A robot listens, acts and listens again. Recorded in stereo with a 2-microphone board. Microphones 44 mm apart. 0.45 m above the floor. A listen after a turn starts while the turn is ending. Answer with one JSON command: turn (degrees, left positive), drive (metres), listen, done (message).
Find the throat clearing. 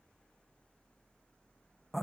{"listen": true}
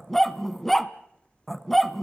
{"listen": true}
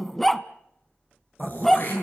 {"turn": 45}
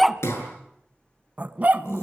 {"turn": 90}
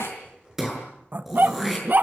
{"done": "Found it: throat clearing, straight ahead, over 4 m away."}